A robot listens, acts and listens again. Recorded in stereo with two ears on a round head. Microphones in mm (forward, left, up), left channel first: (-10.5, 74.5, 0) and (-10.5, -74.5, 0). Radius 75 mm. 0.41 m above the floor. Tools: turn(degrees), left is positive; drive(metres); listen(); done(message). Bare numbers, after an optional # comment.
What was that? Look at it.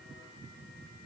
listen()
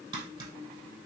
# The tapping: about 25° right or 155° right.
turn(-25)
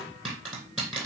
done("Found it: tapping, straight ahead.")